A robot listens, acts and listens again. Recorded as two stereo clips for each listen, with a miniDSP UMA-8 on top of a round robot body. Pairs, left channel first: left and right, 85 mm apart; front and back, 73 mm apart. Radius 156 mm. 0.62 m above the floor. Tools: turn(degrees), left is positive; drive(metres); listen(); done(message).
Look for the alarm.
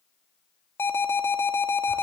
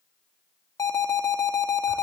turn(degrees=30)
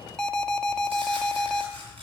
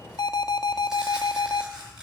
turn(degrees=10)
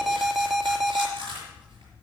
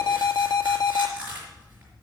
done("Facing the alarm.")